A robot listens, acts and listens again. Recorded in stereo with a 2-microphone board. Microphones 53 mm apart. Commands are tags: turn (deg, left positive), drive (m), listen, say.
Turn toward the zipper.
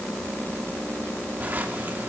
<turn deg="-35"/>
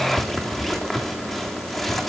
<say>Found it: a zipper, straight ahead, 2 to 4 m away.</say>